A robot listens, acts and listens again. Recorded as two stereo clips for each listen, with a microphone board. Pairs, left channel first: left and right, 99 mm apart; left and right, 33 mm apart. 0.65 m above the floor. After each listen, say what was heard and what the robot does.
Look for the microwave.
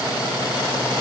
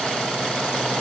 Keep listening.
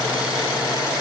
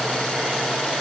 Keep listening.
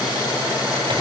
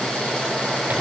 The microwave: about 70° right or 110° right. Turn 70° right.
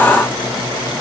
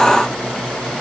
Keep listening.
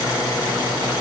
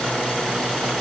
Keep listening.
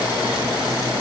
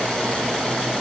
I heard a microwave, but can't make it out now. It was about straight ahead or 40° right.